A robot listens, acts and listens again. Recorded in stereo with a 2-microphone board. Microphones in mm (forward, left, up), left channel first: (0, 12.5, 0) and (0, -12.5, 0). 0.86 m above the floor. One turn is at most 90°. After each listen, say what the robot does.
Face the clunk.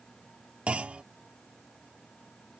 Turn 55° right.
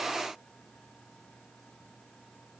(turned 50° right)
Keep listening.
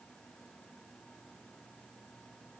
I heard a clunk, but can't make it out now. It was about 5° right or 75° right.